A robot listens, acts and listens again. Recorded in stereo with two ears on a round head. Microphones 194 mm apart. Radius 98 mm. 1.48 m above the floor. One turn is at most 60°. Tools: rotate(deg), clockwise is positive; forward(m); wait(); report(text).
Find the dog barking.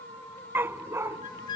rotate(30)
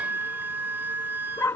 rotate(-10)
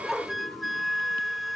report("Facing the dog barking.")